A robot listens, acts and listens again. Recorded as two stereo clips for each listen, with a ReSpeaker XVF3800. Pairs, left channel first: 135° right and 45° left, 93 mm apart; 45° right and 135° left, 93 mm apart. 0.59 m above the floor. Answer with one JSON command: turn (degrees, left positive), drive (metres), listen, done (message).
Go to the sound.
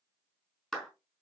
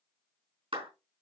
{"turn": 140}
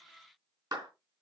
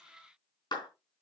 {"drive": 1.0}
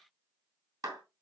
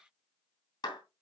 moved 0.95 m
{"drive": 1.0}
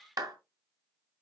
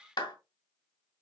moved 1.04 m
{"drive": 1.0}
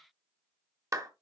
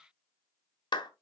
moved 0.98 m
{"turn": -10}
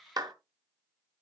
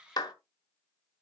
{"drive": 1.0}
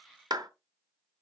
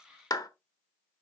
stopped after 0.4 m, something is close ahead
{"done": "Arrived at the clap, straight ahead."}